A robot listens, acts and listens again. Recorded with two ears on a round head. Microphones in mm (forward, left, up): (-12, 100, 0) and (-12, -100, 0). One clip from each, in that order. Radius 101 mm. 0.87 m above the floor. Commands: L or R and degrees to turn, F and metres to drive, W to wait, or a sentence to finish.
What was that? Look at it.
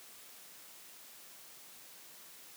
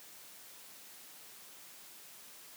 W
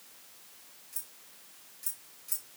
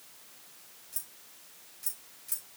L30
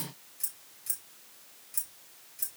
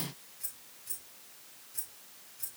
L125
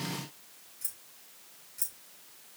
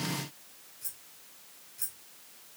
L20
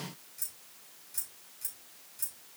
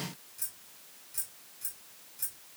Found it: keys jangling, straight ahead, 2 to 4 m away.